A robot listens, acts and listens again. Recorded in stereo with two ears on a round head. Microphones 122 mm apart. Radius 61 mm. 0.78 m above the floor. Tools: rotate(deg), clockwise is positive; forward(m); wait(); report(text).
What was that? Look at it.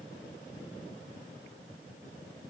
wait()
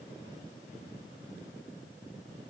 wait()
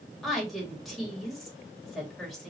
rotate(-30)
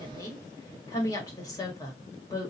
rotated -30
rotate(-150)
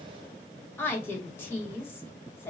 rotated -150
rotate(-20)
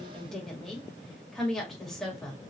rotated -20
report("Found it: a woman speaking, straight ahead, 1 to 2 m away.")